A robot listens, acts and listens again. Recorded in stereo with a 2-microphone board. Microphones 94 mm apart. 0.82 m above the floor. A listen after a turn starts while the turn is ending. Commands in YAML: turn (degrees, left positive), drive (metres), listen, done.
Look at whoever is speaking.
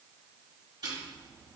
listen: true
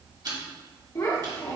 turn: 40
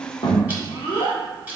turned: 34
turn: 105
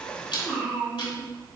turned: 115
turn: -10
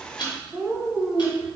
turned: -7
done: "Found it: a child speaking, straight ahead."